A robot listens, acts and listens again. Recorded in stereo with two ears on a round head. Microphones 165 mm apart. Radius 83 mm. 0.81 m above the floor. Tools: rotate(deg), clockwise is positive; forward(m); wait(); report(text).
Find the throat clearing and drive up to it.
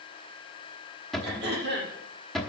rotate(65)
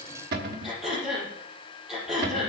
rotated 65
forward(1.0)
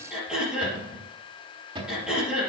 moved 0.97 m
forward(1.0)
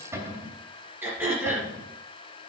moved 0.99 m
rotate(10)
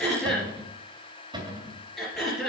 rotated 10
forward(1.0)
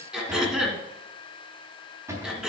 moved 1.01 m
forward(1.0)
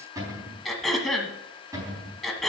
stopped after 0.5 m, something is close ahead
report("Arrived at the throat clearing, straight ahead.")